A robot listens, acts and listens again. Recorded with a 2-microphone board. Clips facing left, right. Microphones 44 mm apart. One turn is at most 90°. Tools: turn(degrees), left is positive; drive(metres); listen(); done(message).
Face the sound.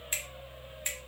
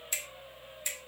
turn(degrees=40)
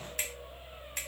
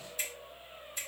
turn(degrees=90)
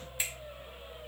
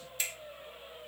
turn(degrees=20)
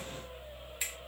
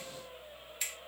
done("Found it: a finger snap, straight ahead.")